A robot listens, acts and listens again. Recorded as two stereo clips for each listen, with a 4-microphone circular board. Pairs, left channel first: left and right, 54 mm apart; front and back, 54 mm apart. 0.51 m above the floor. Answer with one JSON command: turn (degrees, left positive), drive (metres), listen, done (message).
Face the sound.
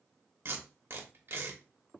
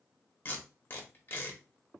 {"turn": -45}
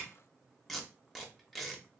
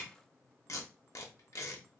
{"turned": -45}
{"done": "Facing the tape being pulled."}